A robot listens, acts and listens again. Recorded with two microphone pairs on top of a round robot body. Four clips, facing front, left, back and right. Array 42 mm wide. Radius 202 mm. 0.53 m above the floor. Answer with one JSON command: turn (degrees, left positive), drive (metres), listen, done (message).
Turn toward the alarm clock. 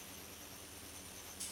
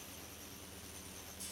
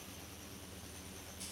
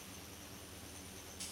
{"listen": true}
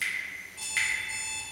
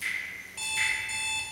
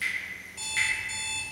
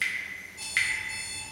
{"turn": 100}
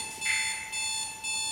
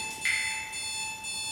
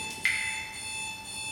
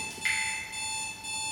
{"done": "Facing the alarm clock, 1 to 2 m away."}